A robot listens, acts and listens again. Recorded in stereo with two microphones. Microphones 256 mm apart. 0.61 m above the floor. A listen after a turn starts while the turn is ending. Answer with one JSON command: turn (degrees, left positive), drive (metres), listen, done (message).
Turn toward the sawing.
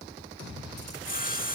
{"turn": 35}
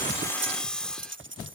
{"done": "Facing the sawing."}